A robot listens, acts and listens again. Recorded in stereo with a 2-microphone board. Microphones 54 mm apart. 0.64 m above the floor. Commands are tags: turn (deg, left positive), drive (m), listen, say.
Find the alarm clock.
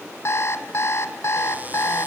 <turn deg="50"/>
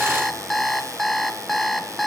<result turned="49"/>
<say>Found it: an alarm clock, straight ahead, 2 to 4 m away.</say>